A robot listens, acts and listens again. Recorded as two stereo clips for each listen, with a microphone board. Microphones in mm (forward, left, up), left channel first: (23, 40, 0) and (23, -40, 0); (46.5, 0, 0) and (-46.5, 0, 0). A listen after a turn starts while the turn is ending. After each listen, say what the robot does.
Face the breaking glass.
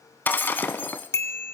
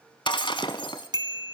Turn 25° left.
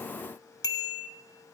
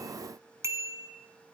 I heard breaking glass from this way, but can't make it out now.